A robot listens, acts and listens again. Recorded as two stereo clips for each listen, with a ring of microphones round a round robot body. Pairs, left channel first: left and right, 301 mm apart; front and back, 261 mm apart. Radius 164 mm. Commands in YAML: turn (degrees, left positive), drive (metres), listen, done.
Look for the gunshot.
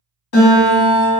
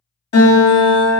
listen: true
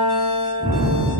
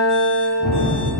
turn: 15
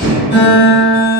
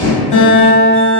done: "Found it: a gunshot, straight ahead."